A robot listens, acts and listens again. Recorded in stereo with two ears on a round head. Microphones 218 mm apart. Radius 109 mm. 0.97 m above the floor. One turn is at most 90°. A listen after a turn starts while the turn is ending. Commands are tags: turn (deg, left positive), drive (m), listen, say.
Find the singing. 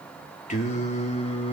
<turn deg="25"/>
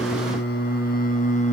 <turn deg="30"/>
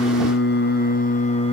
<turn deg="20"/>
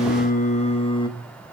<turn deg="15"/>
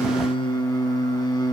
<turn deg="15"/>
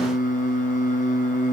<turn deg="30"/>
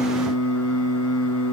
<turn deg="90"/>
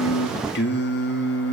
<turn deg="45"/>
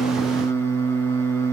<turn deg="10"/>
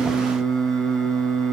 <say>Found it: singing, straight ahead.</say>